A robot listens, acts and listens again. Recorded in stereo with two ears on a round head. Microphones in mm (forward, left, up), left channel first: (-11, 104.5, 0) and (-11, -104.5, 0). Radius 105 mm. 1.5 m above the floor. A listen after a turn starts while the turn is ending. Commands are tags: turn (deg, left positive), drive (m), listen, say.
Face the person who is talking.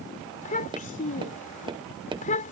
<turn deg="35"/>
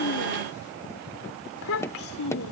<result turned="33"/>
<turn deg="110"/>
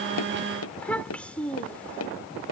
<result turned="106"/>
<say>Facing the child speaking.</say>